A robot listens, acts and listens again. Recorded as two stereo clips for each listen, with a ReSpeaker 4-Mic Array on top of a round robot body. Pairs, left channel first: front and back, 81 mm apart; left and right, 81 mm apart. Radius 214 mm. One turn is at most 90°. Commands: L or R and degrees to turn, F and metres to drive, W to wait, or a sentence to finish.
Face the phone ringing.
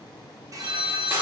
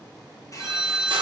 R90
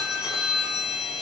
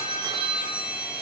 R90
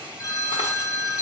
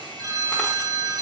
R45
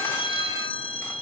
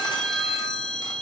Found it: a phone ringing, straight ahead.